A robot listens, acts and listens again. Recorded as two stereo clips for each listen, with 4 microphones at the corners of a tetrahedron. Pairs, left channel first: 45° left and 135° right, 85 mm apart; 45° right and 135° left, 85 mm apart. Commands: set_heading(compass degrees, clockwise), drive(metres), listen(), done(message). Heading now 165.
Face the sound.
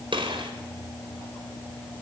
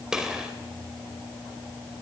set_heading(305)
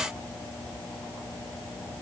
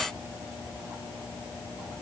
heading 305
done("Facing where the gunshot came from. I can't hear it now.")